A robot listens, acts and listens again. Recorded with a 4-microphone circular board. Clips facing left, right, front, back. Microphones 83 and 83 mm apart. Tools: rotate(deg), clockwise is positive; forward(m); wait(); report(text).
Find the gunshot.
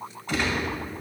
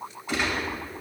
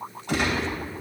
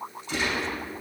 rotate(10)
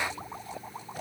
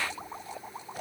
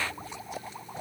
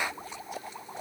report("Facing where the gunshot came from. I can't hear it now.")